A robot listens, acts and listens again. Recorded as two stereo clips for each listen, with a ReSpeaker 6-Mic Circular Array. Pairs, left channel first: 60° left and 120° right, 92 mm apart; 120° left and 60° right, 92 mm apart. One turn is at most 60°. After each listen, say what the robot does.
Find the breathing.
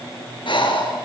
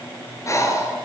Turn 60° left.
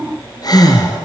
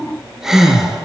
Turn 25° left.
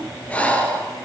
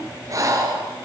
Turn 10° right.
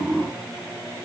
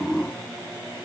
Keep listening.
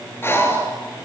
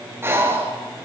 Found it: breathing, straight ahead, 2 to 4 m away.